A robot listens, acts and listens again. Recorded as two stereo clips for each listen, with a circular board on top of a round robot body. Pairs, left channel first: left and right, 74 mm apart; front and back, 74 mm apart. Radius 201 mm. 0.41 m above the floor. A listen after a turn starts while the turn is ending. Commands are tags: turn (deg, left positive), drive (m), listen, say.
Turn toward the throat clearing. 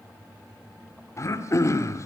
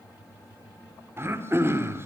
<turn deg="130"/>
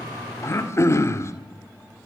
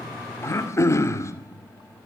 <turn deg="45"/>
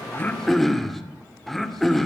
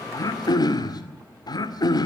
<say>Facing the throat clearing.</say>